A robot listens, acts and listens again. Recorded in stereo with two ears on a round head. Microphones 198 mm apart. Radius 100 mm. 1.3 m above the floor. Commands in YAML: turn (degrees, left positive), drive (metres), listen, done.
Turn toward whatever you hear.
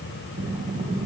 turn: -25
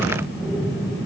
done: "Found it: breathing, straight ahead."